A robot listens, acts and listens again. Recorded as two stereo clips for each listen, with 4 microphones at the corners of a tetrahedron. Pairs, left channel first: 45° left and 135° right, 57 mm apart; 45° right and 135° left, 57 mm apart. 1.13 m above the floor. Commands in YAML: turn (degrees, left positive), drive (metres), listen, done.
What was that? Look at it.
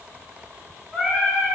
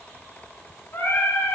turn: -35
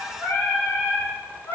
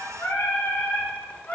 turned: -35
done: "Facing the singing, 2 to 4 m away."